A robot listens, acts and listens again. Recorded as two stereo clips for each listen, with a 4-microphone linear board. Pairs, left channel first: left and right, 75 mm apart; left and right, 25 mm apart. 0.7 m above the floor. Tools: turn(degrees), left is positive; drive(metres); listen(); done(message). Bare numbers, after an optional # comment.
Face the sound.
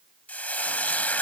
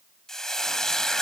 # The frying: about 20° left or 160° left.
turn(20)
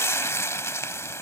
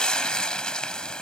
# So it is at 140° left.
turn(140)
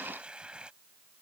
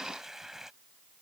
listen()
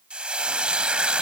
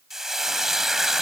# The frying is now 15° right.
turn(-15)
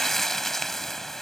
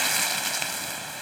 done("Facing the frying.")